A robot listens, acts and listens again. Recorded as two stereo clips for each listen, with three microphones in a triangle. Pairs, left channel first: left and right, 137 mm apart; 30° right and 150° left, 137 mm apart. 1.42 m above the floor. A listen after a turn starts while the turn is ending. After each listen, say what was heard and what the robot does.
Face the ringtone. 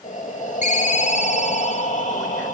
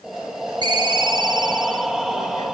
The ringtone: 100° left. Turn 100° left.
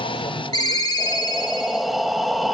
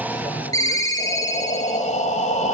The ringtone is now 30° left. Turn 30° left.
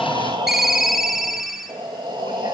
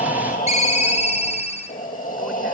Facing the ringtone.